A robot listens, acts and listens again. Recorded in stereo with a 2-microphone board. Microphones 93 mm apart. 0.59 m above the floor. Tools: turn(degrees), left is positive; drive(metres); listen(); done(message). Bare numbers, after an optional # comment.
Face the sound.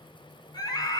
# The scream: about 45° left or 135° left.
turn(45)
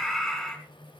done("Facing the scream.")